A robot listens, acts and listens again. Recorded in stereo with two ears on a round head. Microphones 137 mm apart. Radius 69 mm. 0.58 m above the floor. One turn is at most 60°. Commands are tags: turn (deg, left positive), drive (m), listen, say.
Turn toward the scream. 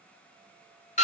<listen/>
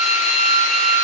<listen/>
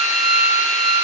<say>I can't make out a scream to turn to.</say>